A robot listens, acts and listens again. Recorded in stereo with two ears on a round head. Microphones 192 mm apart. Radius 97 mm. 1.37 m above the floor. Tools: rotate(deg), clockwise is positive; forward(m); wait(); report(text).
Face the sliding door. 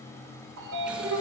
rotate(70)
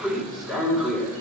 report("Facing the sliding door, 2 to 4 m away.")